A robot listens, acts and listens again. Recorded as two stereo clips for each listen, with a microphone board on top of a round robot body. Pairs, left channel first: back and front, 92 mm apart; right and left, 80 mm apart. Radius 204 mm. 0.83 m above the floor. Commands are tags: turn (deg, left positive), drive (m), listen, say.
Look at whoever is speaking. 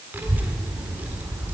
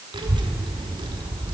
<turn deg="70"/>
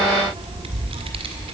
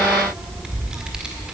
<turn deg="10"/>
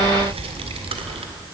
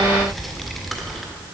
<say>Facing the child speaking, 1 to 2 m away.</say>